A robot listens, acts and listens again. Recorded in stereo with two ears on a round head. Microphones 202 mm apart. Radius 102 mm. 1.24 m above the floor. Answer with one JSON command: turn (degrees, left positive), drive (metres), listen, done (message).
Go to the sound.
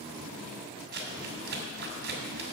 {"turn": -50}
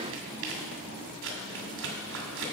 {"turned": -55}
{"turn": -70}
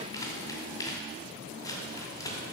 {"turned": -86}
{"turn": 15}
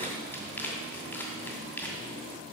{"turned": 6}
{"turn": 10}
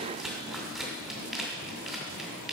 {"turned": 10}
{"drive": 1.0}
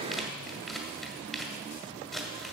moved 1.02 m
{"drive": 1.0}
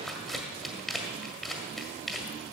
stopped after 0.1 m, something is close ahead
{"done": "I am next to the crumpling."}